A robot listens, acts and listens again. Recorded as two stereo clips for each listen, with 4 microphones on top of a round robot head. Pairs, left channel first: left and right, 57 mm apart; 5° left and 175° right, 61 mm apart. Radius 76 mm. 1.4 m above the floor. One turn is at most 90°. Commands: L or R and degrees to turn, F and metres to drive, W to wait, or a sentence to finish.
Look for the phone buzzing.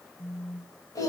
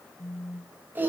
L55
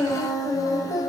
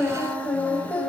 W
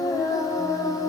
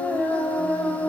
W
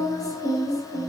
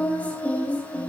Facing where the phone buzzing came from. I can't hear it now.